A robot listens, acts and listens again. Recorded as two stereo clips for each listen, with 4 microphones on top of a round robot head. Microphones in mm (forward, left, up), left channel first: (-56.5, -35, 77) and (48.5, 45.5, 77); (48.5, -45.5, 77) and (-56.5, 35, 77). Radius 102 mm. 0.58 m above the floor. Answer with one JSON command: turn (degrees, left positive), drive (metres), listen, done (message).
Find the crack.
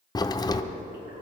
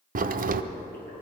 {"turn": 155}
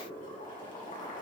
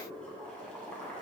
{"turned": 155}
{"done": "I heard a crack from this way, but can't make it out now."}